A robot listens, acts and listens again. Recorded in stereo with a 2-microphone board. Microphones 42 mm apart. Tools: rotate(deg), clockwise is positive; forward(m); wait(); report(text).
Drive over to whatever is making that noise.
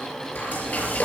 rotate(-45)
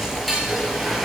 forward(1.0)
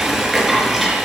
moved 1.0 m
forward(1.0)
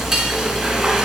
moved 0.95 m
rotate(10)
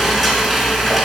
forward(1.0)
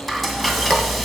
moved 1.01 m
forward(1.0)
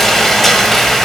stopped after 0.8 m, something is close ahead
rotate(-10)
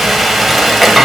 report("Arrived at the frying, straight ahead.")